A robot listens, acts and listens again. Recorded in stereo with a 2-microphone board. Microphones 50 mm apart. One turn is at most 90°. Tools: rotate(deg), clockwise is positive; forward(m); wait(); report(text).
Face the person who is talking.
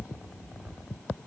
wait()
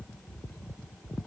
wait()
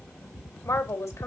rotate(-70)
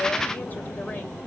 wait()
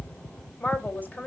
rotate(-35)
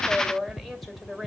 report("Facing the woman speaking.")